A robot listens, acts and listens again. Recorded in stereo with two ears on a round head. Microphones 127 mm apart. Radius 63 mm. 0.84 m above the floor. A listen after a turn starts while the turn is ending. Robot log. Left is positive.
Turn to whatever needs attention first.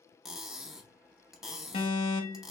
note: The alarm: about 40° left or 140° left.
cmd yaw +40
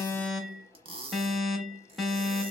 end: Found it: an alarm, straight ahead, under 1 m away.